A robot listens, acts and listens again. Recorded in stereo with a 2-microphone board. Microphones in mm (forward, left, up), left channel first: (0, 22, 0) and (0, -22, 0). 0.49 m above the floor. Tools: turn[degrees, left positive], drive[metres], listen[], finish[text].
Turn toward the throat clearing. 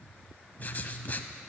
Action: listen[]
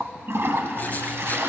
Action: listen[]
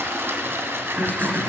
Thought: The throat clearing: about 50° right or 130° right.
Action: turn[-50]
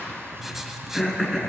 Action: finish[Found it: throat clearing, straight ahead.]